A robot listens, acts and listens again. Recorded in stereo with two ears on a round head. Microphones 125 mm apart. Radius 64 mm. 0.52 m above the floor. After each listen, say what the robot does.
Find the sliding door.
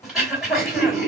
Keep listening.
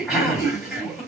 Keep listening.
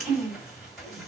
I can't make out a sliding door, only throat clearing.